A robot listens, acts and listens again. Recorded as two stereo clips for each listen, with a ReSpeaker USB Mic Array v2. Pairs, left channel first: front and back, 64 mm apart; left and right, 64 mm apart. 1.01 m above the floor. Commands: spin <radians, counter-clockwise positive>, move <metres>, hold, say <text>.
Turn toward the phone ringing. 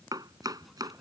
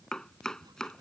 hold
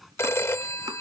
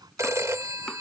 spin -0.87
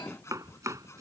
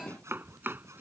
hold
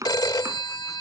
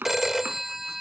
say Facing the phone ringing.